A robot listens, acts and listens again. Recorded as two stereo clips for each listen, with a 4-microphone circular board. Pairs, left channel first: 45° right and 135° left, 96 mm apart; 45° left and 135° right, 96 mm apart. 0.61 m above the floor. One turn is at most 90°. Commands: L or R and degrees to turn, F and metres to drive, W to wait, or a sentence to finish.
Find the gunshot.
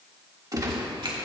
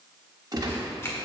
L90
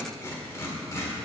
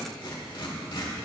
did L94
L90
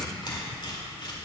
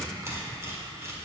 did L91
I heard a gunshot from this way, but can't make it out now.